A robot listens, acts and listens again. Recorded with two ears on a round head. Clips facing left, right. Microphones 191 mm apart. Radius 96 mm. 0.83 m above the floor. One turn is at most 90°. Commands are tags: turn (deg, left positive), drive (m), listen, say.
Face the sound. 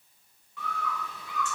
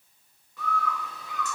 <turn deg="-35"/>
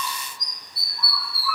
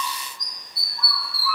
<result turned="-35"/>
<turn deg="-90"/>
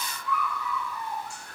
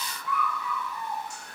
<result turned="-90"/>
<turn deg="-20"/>
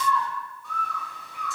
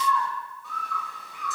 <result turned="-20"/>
<say>Found it: a bird, straight ahead, 1 to 2 m away.</say>